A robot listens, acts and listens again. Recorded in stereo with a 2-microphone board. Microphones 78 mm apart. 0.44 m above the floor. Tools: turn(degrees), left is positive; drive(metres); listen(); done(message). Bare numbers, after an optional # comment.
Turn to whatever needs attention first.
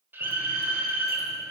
# The scream: about 30° right or 150° right.
turn(-30)
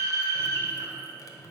# So it is at 115° right.
turn(-115)
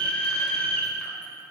# The scream is now 15° left.
turn(15)
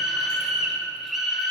done("Facing the scream, 1 to 2 m away.")